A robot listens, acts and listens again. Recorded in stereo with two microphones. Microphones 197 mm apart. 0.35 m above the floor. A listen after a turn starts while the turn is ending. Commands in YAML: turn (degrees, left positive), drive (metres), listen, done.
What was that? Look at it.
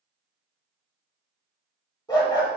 turn: 25
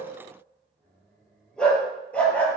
turn: 30
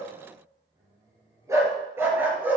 turn: -10
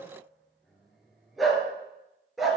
done: "Found it: a dog barking, straight ahead, 2 to 4 m away."